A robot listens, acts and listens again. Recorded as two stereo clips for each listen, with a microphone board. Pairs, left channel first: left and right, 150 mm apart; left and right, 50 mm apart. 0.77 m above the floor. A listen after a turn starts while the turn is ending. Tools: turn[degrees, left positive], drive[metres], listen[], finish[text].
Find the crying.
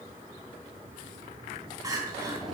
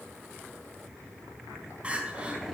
Thought: The crying: about 25° right or 155° right.
Action: turn[-25]
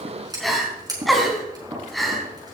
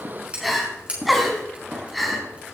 Action: finish[Found it: crying, straight ahead.]